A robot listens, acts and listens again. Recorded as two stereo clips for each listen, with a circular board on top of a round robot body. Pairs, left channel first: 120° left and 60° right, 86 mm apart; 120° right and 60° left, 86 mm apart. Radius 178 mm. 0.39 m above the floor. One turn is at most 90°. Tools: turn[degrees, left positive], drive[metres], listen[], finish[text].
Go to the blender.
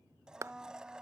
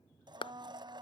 Thought: The blender: 20° left.
Action: turn[20]
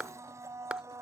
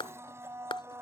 Action: drive[1.0]
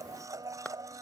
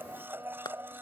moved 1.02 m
Action: drive[1.0]
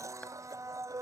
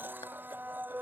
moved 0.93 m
Thought: The blender is now 10° right.
Action: turn[-10]
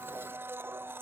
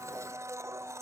Action: drive[1.0]
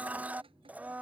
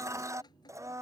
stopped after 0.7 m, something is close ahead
Thought: The blender is now 10° left.
Action: turn[10]
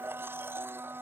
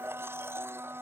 Action: finish[I am next to the blender.]